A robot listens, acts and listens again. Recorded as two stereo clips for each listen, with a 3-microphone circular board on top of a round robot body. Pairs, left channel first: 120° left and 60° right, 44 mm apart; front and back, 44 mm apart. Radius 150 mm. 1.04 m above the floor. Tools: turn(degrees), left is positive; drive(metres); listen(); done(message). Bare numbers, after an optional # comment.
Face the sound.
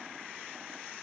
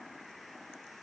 listen()
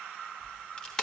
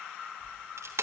# The crack: 165° right.
turn(-165)
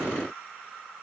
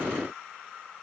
done("I heard a crack from this way, but can't make it out now.")